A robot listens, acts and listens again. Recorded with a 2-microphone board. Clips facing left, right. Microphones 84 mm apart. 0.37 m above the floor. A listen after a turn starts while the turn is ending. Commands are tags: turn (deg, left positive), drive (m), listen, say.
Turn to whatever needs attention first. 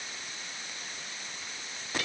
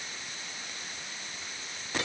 <listen/>
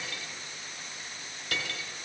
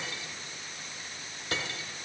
<listen/>
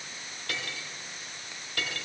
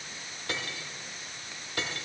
<say>I can't make out anything urgent to turn to.</say>